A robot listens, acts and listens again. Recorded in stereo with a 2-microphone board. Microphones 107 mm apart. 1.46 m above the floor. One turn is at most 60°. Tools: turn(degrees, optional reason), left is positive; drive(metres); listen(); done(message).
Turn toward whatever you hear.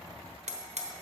turn(degrees=-60)
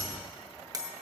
turn(degrees=-35, reason="So it is at 35° right.")
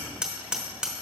done("Facing the hammering, 1 to 2 m away.")